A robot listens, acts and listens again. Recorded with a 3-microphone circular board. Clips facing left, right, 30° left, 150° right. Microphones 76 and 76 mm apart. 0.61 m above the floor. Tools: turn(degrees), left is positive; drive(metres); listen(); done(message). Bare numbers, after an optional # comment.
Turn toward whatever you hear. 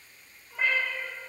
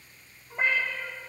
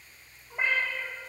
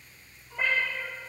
# The cat meowing: 30° right.
turn(-30)
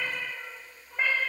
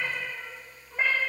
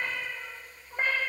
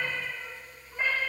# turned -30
done("Facing the cat meowing, 1 to 2 m away.")